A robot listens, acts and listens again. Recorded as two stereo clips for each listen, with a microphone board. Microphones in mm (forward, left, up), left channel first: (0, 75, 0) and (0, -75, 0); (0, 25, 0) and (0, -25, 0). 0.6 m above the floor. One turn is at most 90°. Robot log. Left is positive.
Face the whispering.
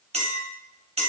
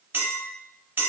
cmd idle
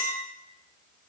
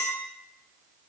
cmd idle
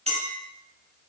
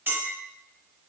end: I can't make out whispering, only a clink.